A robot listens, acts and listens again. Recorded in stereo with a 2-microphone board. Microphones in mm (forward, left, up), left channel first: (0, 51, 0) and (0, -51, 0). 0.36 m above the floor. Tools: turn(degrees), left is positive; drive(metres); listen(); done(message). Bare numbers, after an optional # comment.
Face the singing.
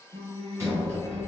# The singing: about 55° right or 125° right.
turn(-55)
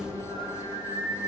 # So it is at 60° right.
turn(-60)
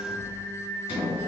done("Facing the singing.")